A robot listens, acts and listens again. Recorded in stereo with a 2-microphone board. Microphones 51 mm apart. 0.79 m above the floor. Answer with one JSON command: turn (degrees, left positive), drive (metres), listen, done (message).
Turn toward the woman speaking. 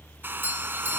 {"listen": true}
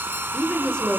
{"turn": 15}
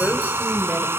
{"turn": 35}
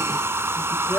{"listen": true}
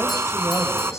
{"listen": true}
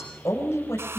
{"turn": 110}
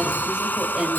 {"turn": -15}
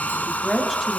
{"done": "Found it: a woman speaking, straight ahead."}